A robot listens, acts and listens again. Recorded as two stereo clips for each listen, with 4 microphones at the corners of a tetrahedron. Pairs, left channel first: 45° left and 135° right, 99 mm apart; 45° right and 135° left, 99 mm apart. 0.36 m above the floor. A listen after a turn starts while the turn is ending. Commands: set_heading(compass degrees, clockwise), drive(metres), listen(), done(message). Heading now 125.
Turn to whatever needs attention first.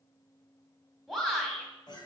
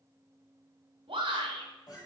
set_heading(350)
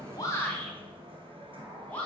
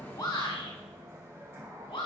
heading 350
set_heading(20)
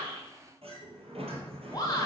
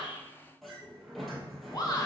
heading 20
done("Found it: a shout, straight ahead.")